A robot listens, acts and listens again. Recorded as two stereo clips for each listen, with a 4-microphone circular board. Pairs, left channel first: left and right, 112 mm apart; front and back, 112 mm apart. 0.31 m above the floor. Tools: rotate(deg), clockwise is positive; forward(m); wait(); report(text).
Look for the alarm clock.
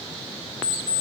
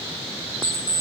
rotate(60)
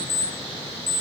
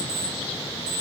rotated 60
report("Facing the alarm clock, 1 to 2 m away.")